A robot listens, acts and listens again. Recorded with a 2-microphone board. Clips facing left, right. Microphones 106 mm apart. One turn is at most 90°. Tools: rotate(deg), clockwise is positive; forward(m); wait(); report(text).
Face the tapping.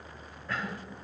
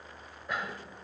wait()
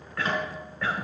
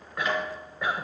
rotate(-30)
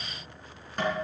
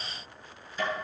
rotate(-90)
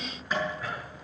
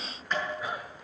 report("Found it: tapping, straight ahead, over 4 m away.")